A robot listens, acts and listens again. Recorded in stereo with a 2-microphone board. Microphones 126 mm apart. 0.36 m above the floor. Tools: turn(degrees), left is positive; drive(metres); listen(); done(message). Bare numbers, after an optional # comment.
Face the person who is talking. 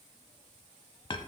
listen()
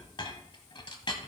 listen()
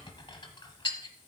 done("I can't make out anyone speaking, only a clink.")